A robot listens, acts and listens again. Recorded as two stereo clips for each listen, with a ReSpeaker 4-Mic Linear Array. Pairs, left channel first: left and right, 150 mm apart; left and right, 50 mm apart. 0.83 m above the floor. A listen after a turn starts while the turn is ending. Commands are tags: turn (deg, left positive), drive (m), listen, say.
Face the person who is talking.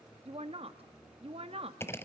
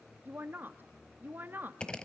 <turn deg="-40"/>
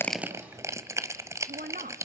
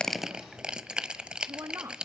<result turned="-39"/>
<turn deg="-100"/>
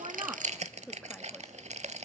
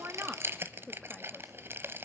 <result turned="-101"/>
<say>Facing the woman speaking.</say>